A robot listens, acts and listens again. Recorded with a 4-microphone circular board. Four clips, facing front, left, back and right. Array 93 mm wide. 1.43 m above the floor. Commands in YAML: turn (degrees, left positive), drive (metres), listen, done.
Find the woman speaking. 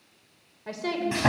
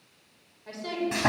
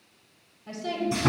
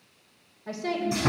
turn: -10
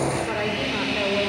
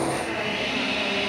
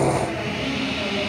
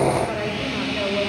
listen: true
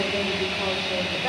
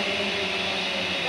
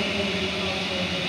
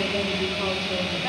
listen: true
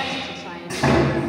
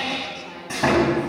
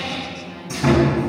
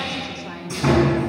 done: "Found it: a woman speaking, straight ahead."